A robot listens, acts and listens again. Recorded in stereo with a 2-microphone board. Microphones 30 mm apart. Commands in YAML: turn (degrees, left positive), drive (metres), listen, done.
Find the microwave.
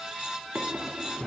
listen: true
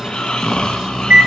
turn: -75
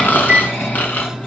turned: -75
turn: -15
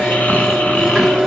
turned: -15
done: "Facing the microwave."